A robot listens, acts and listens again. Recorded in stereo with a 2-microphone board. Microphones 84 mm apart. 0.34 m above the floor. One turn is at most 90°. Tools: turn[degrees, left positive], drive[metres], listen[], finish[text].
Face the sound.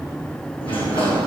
Action: turn[90]
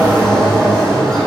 Action: finish[Found it: a sliding door, straight ahead.]